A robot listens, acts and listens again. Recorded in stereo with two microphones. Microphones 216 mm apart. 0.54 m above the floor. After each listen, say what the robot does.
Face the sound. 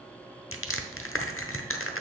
Turn 75° left.
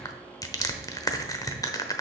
Turn 15° left.
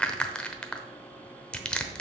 Found it: crushing, straight ahead, under 1 m away.